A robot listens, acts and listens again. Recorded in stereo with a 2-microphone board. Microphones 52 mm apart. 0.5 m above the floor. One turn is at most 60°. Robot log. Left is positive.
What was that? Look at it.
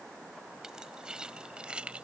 note: The keys jangling: about 25° right or 155° right.
cmd yaw -25
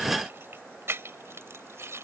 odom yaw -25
note: So it is at 115° right.
cmd yaw -60
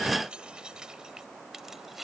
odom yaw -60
end: Facing the keys jangling.